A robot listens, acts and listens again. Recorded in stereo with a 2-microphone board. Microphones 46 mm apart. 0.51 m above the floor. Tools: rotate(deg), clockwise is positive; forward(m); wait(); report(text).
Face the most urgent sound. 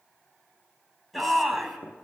rotate(-30)
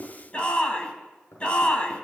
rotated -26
rotate(-155)
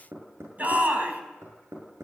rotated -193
rotate(35)
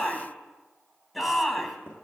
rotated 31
report("Found it: a shout, straight ahead, over 4 m away.")